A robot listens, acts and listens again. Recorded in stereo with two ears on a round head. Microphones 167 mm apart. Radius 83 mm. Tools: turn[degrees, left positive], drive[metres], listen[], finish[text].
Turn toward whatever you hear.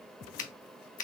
Thought: The finger snap: about 45° left or 135° left.
Action: turn[45]
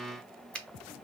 Action: finish[Found it: a finger snap, straight ahead.]